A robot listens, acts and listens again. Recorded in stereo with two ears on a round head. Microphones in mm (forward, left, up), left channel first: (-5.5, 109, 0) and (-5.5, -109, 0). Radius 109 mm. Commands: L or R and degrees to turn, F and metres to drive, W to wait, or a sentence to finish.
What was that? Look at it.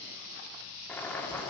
L30
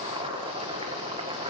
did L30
R25
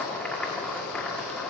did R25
Found it: boiling, straight ahead, 1 to 2 m away.